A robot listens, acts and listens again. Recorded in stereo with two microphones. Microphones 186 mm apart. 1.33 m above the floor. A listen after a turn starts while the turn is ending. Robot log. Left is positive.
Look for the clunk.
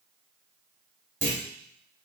cmd yaw -90
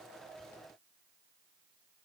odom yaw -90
end: I heard a clunk from this way, but can't make it out now.